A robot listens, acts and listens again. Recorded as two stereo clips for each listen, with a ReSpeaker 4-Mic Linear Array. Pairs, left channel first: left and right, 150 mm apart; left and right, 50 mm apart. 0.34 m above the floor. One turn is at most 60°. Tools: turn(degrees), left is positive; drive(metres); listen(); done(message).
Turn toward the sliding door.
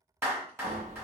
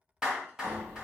turn(degrees=-60)
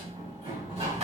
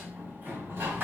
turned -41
turn(degrees=-50)
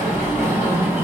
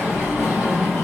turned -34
turn(degrees=-15)
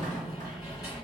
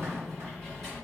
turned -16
done("Facing the sliding door, 1 to 2 m away.")